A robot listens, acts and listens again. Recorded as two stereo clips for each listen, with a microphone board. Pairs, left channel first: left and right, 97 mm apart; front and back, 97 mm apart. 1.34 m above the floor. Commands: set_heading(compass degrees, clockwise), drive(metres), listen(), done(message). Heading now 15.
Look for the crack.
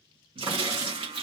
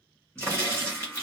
set_heading(130)
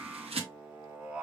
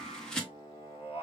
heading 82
set_heading(132)
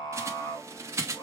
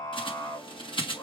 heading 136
done("Facing where the crack came from. I can't hear it now.")